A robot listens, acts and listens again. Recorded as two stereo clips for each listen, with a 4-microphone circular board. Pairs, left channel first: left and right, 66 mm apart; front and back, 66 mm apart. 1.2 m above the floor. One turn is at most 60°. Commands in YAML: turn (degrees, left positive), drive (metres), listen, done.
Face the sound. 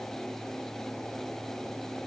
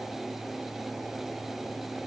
listen: true
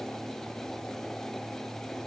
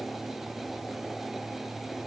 listen: true
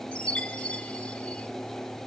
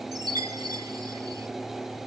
turn: 60
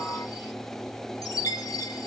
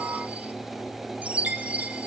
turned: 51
turn: 60
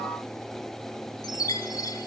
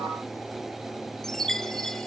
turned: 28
turn: 60
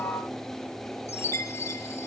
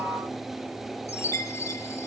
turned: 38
turn: 45
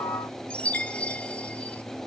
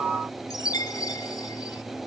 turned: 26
turn: 20
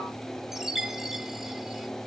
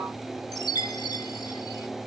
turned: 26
done: "Facing the chime, 1 to 2 m away."